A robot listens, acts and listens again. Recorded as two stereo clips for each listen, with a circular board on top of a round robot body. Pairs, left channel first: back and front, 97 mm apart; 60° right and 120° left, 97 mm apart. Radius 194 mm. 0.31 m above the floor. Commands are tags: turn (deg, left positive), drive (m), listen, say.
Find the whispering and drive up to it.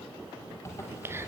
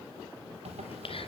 <turn deg="-60"/>
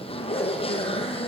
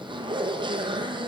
<listen/>
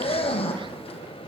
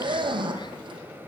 <listen/>
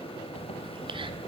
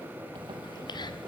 <turn deg="-20"/>
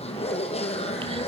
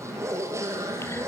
<listen/>
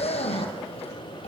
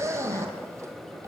<listen/>
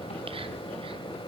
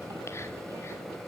<say>Facing where the whispering came from. I can't hear it now. I did not reach it.</say>